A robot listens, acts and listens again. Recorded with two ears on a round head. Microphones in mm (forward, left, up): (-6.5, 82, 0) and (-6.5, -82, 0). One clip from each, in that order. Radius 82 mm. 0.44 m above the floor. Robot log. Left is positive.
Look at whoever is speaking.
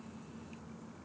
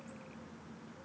cmd idle
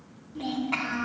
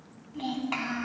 note: The child speaking: about 40° right or 140° right.
cmd yaw -40
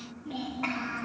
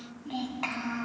note: So it is at 95° right.
cmd yaw -95
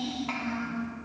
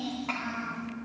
end: Facing the child speaking, 2 to 4 m away.